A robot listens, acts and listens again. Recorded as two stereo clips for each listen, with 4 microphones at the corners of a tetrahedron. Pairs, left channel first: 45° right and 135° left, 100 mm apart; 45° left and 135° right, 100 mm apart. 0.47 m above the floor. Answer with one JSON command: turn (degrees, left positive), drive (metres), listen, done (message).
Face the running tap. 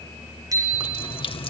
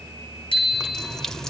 {"turn": -40}
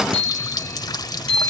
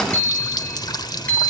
{"done": "Found it: a running tap, straight ahead."}